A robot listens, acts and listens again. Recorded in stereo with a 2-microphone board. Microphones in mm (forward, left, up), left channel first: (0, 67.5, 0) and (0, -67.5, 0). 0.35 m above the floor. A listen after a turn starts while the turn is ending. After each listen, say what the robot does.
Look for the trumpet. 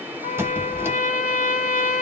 Turn 65° left.
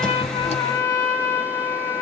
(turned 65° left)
Turn 30° left.
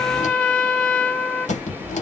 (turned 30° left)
Turn 15° left.
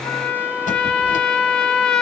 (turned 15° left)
Found it: a trumpet, straight ahead.